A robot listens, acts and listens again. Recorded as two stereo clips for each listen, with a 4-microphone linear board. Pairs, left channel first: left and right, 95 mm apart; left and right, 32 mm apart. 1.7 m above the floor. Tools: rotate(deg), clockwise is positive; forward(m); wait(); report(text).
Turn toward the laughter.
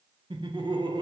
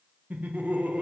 rotate(55)
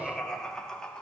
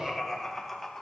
rotate(-10)
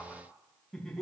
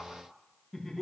report("Facing the laughter.")